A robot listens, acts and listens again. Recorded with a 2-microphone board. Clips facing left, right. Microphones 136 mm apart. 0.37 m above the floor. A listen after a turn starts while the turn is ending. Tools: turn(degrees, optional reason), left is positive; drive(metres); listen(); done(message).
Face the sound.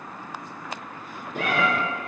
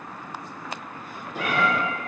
turn(degrees=55, reason="The cat meowing: about 55° left or 125° left.")
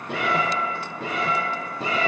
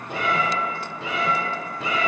turn(degrees=35, reason="So it is at 35° left.")
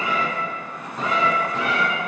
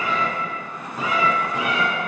turn(degrees=-20, reason="The cat meowing is now 20° right.")
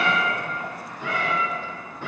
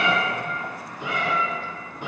turn(degrees=-15, reason="The cat meowing is now 15° right.")
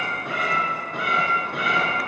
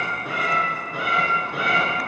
done("Found it: a cat meowing, straight ahead.")